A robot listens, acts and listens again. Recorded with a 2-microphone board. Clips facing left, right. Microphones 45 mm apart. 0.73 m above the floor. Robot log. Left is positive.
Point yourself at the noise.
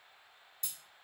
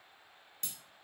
note: The breaking glass: about 55° right or 125° right.
cmd yaw -55
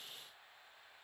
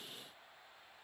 cmd idle
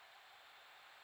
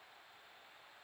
end: I heard breaking glass, but can't make it out now. It was about straight ahead or 70° right.